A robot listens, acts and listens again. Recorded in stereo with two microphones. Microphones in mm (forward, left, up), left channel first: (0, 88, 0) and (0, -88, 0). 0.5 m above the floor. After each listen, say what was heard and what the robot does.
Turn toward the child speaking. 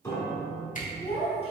The child speaking: about 35° left or 145° left. Turn 35° left.
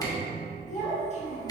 The child speaking: about 35° left or 145° left. Turn 35° left.
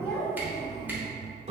Facing the child speaking, 1 to 2 m away.